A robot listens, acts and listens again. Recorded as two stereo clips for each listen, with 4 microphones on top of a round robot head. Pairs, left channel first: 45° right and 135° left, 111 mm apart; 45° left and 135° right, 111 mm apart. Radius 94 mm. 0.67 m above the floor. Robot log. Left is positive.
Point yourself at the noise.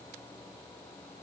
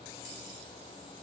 cmd idle
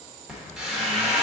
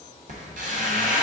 note: The squeak: 140° right.
cmd yaw -140
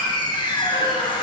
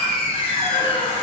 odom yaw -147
end: Found it: a squeak, straight ahead.